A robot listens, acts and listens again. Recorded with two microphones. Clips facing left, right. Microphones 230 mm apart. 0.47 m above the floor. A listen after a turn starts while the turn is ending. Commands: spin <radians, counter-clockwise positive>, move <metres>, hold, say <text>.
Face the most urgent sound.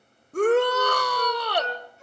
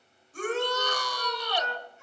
spin 1.13
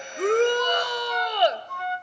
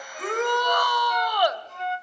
spin 0.52
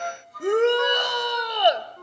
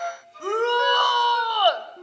spin 0.44
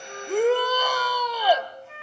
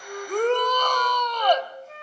spin 0.17
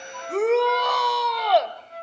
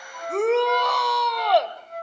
say Facing the shout.